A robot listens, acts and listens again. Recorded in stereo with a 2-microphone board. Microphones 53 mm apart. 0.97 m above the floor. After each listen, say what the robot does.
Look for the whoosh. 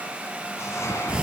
Turn 65° left.
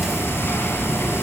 Keep listening.
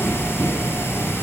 Keep listening.
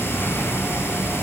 I heard a whoosh, but can't make it out now. It was about straight ahead or 50° left.